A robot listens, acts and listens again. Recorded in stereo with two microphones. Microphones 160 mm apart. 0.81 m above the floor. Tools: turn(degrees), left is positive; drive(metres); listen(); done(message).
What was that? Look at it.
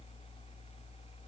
listen()
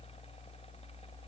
listen()
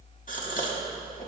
turn(degrees=55)
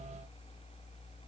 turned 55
listen()
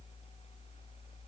done("I heard a gasp, but can't make it out now. It was about straight ahead or 70° left.")